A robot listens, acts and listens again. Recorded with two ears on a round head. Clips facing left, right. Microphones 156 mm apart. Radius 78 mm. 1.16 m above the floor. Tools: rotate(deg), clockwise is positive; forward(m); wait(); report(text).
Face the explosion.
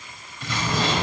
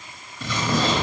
rotate(90)
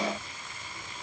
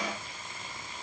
report("I heard an explosion from this way, but can't make it out now.")